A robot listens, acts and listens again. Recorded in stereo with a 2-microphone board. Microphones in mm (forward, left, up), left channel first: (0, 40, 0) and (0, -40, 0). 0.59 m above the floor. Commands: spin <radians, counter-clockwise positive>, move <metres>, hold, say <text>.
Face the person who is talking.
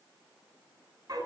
hold
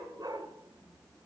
hold
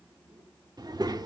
spin -1.05
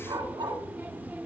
spin -0.44
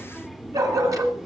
say Found it: a child speaking, straight ahead.